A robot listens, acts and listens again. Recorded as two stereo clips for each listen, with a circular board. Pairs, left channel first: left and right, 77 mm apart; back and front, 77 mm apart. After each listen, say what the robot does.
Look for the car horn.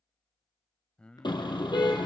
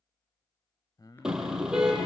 Turn 80° left.
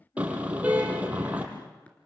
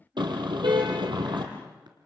Turn 15° right.
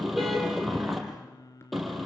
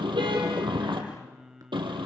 Found it: a car horn, straight ahead, over 4 m away.